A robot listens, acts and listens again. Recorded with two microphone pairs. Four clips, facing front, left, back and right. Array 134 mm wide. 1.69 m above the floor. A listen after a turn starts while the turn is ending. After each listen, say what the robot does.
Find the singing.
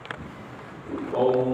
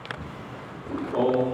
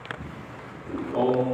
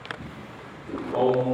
Turn 40° right.
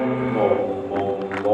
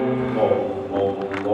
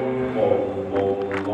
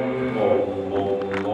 Turn 10° right.
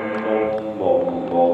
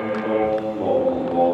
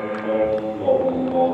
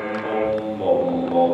Turn 15° right.
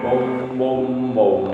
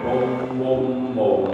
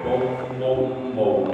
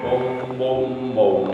Turn 35° right.
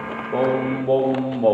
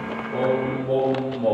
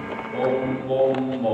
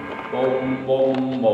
Turn 20° right.
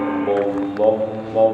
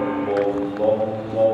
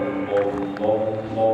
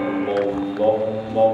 Facing the singing.